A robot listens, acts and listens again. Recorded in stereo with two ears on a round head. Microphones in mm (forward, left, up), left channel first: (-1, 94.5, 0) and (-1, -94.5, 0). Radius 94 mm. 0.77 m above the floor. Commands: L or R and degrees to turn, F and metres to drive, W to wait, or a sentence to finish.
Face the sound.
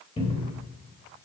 L30
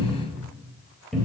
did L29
Found it: a cupboard door, straight ahead, 1 to 2 m away.